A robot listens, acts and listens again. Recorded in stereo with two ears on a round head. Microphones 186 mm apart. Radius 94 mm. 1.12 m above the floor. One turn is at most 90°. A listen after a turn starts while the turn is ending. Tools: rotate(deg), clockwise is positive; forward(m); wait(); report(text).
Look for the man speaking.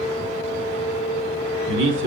rotate(60)
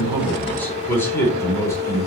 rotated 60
rotate(-15)
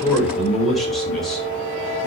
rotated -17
report("Facing the man speaking.")